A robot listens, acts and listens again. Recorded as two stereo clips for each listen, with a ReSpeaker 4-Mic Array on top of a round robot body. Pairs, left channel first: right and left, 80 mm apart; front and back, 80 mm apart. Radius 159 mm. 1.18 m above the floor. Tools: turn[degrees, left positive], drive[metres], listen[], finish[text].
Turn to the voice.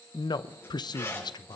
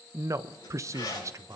Thought: The man speaking: 125° right.
Action: turn[-125]
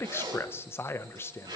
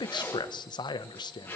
Thought: The man speaking is now 30° right.
Action: turn[-30]
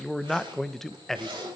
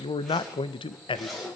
Action: finish[Facing the man speaking.]